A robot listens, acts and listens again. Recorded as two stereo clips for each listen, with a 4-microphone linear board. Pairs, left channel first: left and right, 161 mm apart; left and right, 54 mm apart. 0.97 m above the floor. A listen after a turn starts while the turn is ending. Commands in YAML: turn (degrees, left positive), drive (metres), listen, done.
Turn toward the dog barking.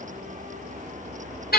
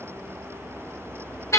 listen: true
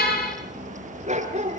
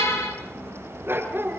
turn: -45
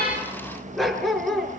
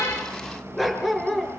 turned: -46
done: "Facing the dog barking."